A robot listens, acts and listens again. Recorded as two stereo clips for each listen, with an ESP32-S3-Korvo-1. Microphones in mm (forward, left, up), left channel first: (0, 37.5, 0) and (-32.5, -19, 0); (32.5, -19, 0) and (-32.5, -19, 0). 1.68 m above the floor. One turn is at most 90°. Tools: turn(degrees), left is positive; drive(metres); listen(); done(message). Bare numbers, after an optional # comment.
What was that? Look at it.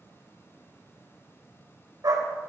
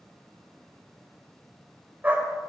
# The dog barking: 120° right.
turn(-90)
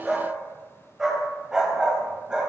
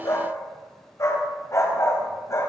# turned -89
# The dog barking is now 40° right.
turn(-40)
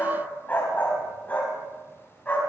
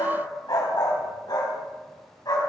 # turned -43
done("Facing the dog barking, over 4 m away.")